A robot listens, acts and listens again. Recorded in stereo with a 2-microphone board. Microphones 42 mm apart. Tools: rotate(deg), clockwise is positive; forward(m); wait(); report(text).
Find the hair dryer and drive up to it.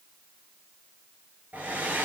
rotate(40)
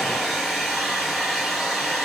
forward(1.0)
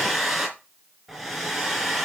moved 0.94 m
forward(1.0)
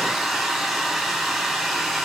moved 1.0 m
forward(1.0)
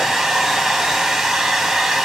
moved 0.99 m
forward(1.0)
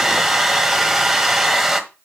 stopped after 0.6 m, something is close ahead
rotate(10)
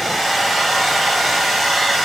report("I am next to the hair dryer.")